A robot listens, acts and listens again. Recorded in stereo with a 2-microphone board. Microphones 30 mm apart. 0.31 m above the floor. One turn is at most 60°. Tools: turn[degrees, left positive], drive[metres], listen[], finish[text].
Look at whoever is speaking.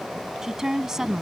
Action: turn[-30]
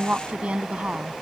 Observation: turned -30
Thought: So it is at 135° right.
Action: turn[-60]
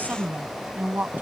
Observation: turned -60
Thought: The woman speaking is now 75° right.
Action: turn[-60]
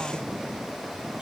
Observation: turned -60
Thought: Nothing new. It was at 15° right.
Action: turn[-15]
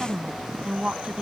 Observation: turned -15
Thought: The woman speaking is now 25° right.
Action: turn[-25]
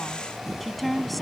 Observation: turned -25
Action: finish[Found it: a woman speaking, straight ahead.]